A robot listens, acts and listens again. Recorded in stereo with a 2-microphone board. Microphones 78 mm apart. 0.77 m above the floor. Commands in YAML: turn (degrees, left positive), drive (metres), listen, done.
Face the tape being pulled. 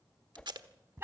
turn: -90
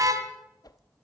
listen: true
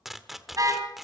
done: "Facing the tape being pulled, 1 to 2 m away."